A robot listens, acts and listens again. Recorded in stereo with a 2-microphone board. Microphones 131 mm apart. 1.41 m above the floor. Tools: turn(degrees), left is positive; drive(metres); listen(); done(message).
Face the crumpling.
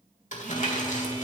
turn(degrees=65)
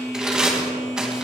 done("Facing the crumpling, 2 to 4 m away.")